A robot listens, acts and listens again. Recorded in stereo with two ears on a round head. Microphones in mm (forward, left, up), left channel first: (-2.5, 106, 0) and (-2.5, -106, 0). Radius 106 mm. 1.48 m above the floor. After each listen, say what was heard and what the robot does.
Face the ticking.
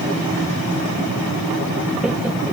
Keep listening.
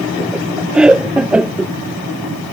Keep listening.
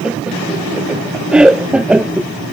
I can't make out ticking to turn to.